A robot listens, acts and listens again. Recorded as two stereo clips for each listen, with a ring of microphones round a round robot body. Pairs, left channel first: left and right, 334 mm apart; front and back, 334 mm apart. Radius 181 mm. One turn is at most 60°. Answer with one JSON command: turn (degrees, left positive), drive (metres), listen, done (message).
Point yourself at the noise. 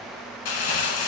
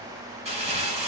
{"turn": 60}
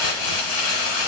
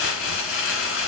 {"turn": 60}
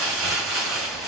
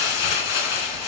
{"done": "Facing the crumpling, 1 to 2 m away."}